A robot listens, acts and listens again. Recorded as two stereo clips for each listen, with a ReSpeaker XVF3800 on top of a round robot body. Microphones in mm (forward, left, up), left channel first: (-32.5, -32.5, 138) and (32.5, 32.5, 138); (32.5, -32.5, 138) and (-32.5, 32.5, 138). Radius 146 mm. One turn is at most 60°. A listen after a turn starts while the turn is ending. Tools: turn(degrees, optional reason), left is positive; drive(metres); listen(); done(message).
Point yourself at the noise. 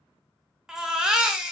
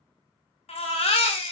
turn(degrees=-40, reason="The baby crying: 40° right.")
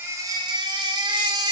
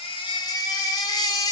done("Facing the baby crying.")